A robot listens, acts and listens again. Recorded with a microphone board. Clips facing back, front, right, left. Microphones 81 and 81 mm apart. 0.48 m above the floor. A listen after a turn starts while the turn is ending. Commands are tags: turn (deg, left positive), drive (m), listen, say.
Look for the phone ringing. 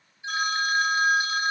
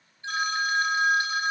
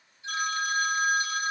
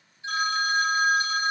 <turn deg="100"/>
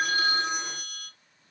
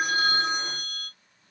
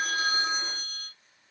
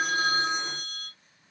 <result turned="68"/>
<turn deg="35"/>
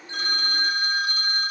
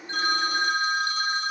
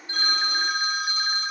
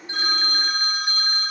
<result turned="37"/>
<say>Found it: a phone ringing, straight ahead.</say>